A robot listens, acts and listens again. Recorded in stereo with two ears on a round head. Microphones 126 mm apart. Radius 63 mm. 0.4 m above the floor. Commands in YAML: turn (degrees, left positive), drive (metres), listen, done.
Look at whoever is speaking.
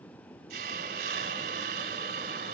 listen: true
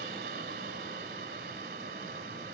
listen: true
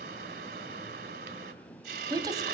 turn: -30
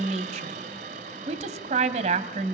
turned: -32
turn: -120
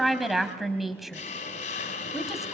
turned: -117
done: "Facing the woman speaking, 2 to 4 m away."